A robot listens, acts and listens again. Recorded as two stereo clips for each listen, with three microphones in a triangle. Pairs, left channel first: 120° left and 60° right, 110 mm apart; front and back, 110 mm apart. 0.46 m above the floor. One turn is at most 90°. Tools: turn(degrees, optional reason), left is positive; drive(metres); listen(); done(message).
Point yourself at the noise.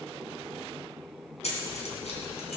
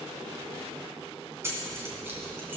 turn(degrees=90, reason="The keys jangling: 115° left.")
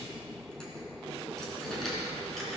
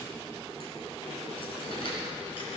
turn(degrees=35, reason="The keys jangling is now 35° left.")
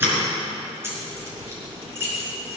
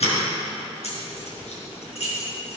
turn(degrees=10, reason="The keys jangling is now 10° left.")
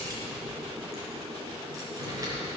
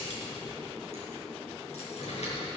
done("Found it: keys jangling, straight ahead.")